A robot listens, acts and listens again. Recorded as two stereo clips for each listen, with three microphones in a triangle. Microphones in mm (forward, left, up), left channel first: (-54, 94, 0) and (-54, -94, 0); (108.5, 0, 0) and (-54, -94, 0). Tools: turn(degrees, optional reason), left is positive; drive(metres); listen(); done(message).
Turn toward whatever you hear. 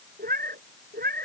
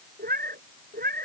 turn(degrees=-120, reason="The cat meowing: 120° right.")
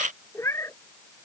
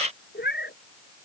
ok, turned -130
turn(degrees=15, reason="The cat meowing is now 15° left.")
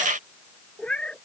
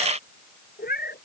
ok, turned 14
done("Facing the cat meowing.")